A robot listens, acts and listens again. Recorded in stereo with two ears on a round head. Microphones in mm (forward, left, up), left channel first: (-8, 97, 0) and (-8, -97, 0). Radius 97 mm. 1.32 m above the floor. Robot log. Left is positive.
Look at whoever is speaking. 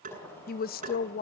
note: The woman speaking: about 45° left or 135° left.
cmd yaw +45
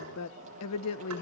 note: So it is at 90° left.
cmd yaw +90
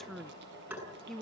end: Facing the woman speaking, under 1 m away.